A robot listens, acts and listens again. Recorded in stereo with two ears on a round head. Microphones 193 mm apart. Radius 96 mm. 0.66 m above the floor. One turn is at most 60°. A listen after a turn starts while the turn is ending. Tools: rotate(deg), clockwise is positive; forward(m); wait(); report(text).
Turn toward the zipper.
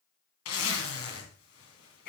rotate(-60)
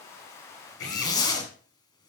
rotate(-20)
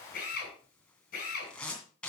report("Facing the zipper.")